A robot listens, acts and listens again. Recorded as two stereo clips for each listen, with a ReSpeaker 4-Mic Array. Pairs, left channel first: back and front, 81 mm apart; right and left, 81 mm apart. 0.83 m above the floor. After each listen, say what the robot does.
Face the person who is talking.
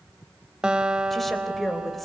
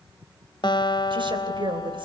Turn 90° left.
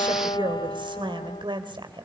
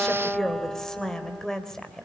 Facing the woman speaking, 2 to 4 m away.